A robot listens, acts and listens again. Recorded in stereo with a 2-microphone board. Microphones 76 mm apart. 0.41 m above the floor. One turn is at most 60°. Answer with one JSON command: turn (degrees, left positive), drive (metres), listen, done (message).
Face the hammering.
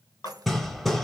{"turn": 30}
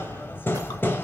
{"turn": 60}
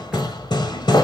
{"turn": 60}
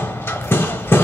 {"turn": 35}
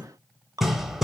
{"done": "Facing the hammering, under 1 m away."}